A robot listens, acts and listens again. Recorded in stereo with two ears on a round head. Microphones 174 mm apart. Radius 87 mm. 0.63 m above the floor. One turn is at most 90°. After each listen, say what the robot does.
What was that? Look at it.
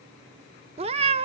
Turn 30° right.
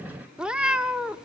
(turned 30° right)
Found it: a cat meowing, straight ahead.